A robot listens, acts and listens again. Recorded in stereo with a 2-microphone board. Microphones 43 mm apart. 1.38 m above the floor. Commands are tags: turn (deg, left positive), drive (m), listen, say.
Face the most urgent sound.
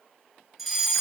<turn deg="30"/>
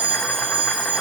<turn deg="-35"/>
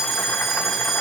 <say>Found it: a fire alarm, straight ahead.</say>